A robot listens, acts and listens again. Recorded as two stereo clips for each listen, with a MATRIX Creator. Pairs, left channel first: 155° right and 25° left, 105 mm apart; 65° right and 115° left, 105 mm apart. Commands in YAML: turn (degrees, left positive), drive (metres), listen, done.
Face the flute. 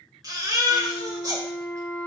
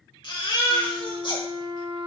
turn: 125
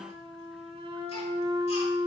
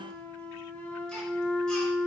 done: "Facing the flute, 1 to 2 m away."